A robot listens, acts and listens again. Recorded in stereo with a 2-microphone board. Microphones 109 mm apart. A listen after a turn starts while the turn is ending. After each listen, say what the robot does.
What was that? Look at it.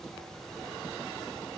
Keep listening.
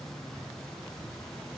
Keep listening.
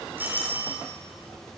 Turn 20° right.
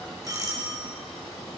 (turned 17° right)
Turn 145° right.
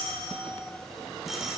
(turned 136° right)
Found it: a doorbell, straight ahead.